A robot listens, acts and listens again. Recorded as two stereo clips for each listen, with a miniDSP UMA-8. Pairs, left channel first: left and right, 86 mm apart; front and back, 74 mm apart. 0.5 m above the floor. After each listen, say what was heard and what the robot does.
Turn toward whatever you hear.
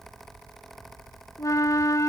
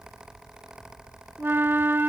The flute: 130° left. Turn 130° left.
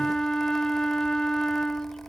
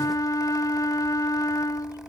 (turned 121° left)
The flute is now 10° left. Turn 10° left.
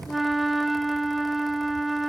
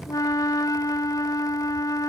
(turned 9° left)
Found it: a flute, straight ahead.